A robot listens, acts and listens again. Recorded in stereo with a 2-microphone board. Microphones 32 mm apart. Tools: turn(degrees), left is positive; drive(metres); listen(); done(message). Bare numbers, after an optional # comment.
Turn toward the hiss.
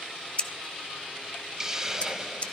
# The hiss: about 15° right or 165° right.
turn(-15)
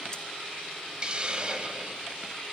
# So it is at 150° right.
turn(-150)
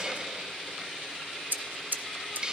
# The hiss is now 30° right.
turn(-30)
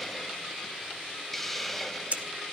done("Found it: a hiss, straight ahead.")